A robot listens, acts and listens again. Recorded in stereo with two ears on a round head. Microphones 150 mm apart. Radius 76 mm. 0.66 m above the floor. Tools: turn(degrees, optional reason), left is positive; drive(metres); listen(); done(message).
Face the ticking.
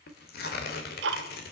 turn(degrees=-90)
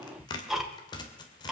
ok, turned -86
done("Facing the ticking, 1 to 2 m away.")